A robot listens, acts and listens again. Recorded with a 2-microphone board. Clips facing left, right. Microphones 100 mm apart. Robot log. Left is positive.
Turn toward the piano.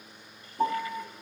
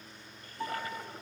note: The piano: about 50° left or 130° left.
cmd yaw +50
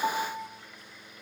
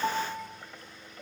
end: Found it: a piano, straight ahead.